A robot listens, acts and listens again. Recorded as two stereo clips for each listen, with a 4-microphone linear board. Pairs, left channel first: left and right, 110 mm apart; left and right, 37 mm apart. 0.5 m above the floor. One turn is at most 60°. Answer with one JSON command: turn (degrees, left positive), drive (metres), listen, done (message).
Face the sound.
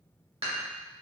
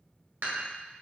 {"turn": -60}
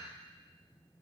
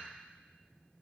{"listen": true}
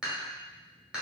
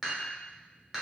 {"turn": -10}
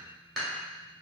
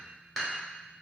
{"done": "Found it: dishes clattering, straight ahead."}